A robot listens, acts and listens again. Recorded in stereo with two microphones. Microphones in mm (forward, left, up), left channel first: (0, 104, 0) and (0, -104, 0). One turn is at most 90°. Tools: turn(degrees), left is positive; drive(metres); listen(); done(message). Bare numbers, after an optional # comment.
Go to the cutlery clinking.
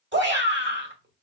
listen()
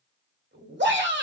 listen()
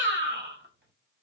done("I can't make out cutlery clinking to turn to.")